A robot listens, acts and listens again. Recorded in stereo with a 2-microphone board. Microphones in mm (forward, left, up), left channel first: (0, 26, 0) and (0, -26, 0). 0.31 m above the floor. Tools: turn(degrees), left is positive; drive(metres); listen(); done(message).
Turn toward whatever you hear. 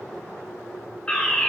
turn(degrees=20)
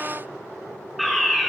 done("Found it: a fire alarm, straight ahead, over 4 m away.")